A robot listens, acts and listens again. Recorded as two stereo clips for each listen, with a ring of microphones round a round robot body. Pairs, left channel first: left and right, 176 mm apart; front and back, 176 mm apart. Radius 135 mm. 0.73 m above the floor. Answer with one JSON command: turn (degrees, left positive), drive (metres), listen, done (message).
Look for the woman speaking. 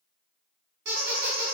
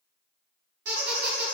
{"listen": true}
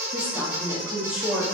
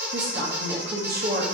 {"turn": -175}
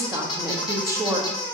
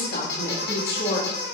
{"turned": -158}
{"turn": -15}
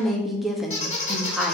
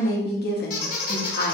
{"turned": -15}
{"done": "Facing the woman speaking."}